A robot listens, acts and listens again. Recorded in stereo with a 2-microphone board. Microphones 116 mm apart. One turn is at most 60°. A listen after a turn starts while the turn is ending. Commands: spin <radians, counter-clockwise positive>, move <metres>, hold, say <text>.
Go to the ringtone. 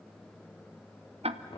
hold
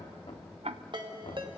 spin -0.79
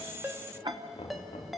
move 1.0
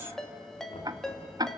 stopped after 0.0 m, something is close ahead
say Something is in my way. I am facing the ringtone but have not reached it.